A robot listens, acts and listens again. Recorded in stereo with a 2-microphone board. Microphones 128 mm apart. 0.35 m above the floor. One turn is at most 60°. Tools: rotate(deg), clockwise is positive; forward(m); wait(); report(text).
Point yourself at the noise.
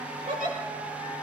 rotate(60)
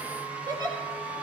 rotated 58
rotate(35)
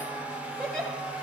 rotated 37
report("Found it: a giggle, straight ahead.")